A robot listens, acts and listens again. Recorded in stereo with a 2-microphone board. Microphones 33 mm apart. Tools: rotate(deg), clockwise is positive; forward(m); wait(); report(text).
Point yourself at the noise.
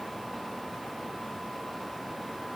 wait()
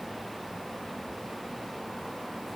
wait()
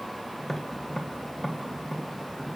rotate(-30)
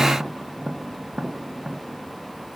rotate(20)
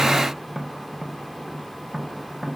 report("Facing the tapping, 1 to 2 m away.")